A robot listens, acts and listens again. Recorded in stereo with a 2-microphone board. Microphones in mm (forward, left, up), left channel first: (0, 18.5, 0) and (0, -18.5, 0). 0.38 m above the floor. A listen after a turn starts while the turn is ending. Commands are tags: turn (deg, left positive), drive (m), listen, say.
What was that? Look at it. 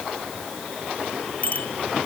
<turn deg="45"/>
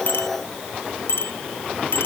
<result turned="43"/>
<turn deg="90"/>
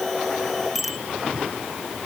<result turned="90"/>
<say>Found it: a bicycle bell, straight ahead.</say>